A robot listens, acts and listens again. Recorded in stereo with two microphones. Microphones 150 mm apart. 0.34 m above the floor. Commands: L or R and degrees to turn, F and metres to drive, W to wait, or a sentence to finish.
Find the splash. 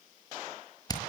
W
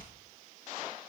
W
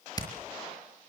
I can't make out a splash to turn to.